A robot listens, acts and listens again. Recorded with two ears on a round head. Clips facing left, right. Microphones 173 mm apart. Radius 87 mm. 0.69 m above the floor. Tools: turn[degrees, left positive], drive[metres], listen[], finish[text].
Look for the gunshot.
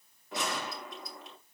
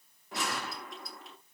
Action: turn[30]
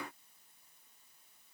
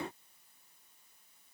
Action: listen[]
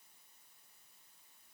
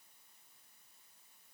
Action: finish[I heard a gunshot, but can't make it out now. It was about 30° right or 150° left.]